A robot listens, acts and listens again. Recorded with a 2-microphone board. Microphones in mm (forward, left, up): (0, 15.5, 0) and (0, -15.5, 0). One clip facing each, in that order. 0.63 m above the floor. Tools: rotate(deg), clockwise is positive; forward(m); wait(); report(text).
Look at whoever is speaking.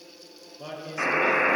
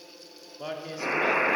rotate(20)
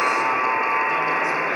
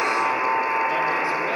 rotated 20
wait()
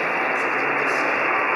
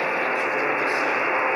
wait()
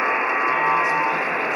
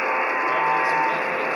report("I heard a man speaking, but can't make it out now. It was about straight ahead or 140° right.")